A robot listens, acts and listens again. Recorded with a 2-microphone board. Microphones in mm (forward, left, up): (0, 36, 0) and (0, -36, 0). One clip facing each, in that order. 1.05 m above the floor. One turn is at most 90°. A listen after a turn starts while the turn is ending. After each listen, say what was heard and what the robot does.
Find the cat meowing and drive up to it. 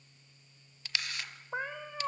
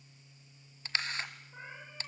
Turn 90° left.
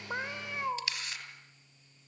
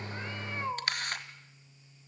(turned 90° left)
Drive 1.0 m forward.
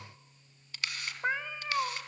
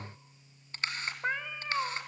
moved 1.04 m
Drive 1.0 m forward.
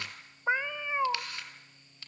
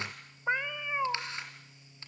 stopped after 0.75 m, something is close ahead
The cat meowing is now 10° left. Turn 10° left.
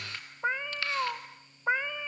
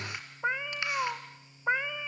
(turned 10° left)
Arrived at the cat meowing, straight ahead.